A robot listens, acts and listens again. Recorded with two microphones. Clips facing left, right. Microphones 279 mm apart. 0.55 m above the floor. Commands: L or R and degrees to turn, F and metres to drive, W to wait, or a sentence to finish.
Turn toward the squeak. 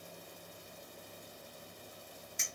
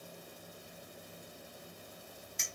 W
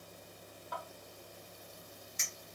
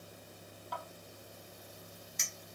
W
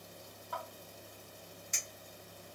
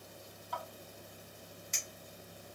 I can't make out a squeak to turn to.